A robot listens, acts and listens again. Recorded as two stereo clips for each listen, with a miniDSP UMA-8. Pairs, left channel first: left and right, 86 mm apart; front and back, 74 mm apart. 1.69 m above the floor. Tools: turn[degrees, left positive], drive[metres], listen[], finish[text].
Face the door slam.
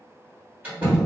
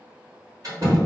Thought: The door slam: 155° right.
Action: turn[-155]
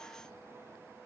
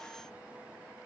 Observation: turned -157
Action: finish[Facing where the door slam came from. I can't hear it now.]